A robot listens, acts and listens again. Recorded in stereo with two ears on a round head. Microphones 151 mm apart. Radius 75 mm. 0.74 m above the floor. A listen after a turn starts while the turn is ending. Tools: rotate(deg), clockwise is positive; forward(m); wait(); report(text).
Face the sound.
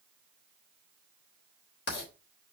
rotate(-65)
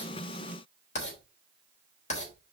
rotate(-45)
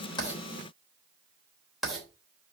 report("Found it: writing, straight ahead, 2 to 4 m away.")